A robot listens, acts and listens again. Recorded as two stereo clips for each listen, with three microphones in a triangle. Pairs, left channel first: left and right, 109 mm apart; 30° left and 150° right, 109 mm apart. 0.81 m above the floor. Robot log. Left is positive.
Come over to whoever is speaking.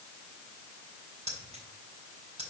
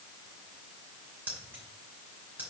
cmd idle
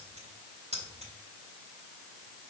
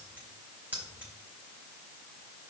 cmd idle
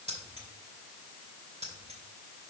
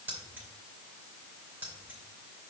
end: I can't make out anyone speaking to turn to.